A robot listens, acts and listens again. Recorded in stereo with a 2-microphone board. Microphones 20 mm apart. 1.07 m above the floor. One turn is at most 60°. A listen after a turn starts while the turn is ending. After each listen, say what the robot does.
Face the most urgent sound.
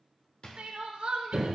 Turn 60° right.
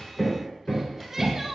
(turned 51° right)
Turn 10° right.
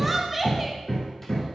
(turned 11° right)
Found it: crying, straight ahead, under 1 m away.